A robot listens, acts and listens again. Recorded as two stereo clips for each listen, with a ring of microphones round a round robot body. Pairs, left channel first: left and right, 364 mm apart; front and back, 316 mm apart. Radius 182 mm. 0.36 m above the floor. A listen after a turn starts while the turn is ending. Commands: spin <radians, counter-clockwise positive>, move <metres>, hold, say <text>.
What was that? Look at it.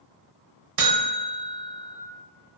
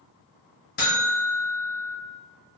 spin -1.05
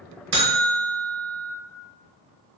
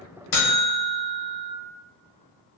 spin -0.26
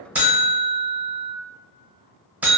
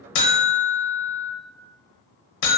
say Found it: a buzzer, straight ahead, under 1 m away.